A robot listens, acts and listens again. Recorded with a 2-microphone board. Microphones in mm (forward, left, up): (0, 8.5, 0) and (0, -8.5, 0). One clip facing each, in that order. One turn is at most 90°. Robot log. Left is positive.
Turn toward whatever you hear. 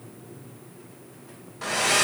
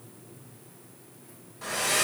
note: The hair dryer: about 25° left or 155° left.
cmd yaw +25
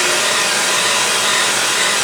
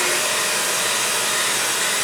note: So it is at 130° left.
cmd yaw +90
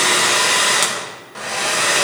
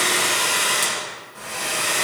note: The hair dryer is now 50° left.
cmd yaw +50
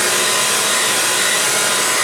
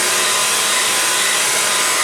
end: Found it: a hair dryer, straight ahead, 1 to 2 m away.